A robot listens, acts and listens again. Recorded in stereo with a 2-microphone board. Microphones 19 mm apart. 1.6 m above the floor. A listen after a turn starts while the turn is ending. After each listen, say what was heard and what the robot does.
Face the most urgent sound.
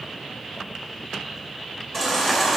The baby crying: about 15° left or 165° left. Turn 15° left.
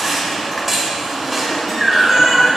Found it: a baby crying, straight ahead.